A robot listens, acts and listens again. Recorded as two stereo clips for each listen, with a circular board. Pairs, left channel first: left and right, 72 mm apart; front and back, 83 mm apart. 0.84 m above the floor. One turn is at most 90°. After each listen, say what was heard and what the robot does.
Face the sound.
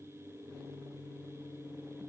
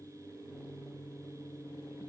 Keep listening.
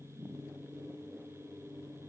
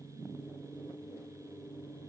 Keep listening.
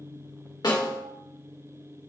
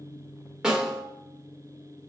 The snare drum: 100° left. Turn 90° left.
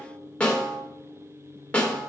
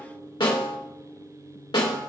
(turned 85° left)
The snare drum is now 15° left. Turn 15° left.
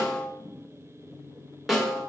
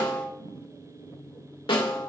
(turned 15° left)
Found it: a snare drum, straight ahead, 1 to 2 m away.